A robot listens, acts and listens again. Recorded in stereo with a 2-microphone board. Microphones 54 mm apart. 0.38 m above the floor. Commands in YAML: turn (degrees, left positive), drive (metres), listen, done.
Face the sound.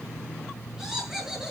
turn: -30
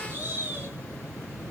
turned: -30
turn: -140
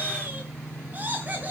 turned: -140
turn: -35
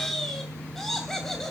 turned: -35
done: "Facing the laughter, 2 to 4 m away."